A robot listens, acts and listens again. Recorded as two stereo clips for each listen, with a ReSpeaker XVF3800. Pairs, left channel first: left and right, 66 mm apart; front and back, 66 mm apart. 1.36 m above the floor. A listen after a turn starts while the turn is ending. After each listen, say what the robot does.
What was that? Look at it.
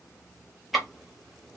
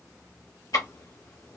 Found it: ticking, straight ahead, 1 to 2 m away.